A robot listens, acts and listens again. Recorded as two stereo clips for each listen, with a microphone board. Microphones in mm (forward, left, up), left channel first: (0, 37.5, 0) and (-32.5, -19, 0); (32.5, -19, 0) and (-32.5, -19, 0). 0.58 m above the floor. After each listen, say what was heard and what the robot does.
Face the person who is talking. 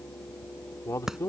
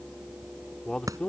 The man speaking: 65° left. Turn 65° left.
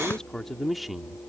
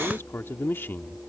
The man speaking is now 40° right. Turn 40° right.
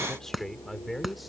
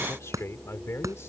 The man speaking is now 30° right. Turn 30° right.
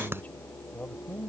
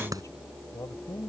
Found it: a man speaking, straight ahead.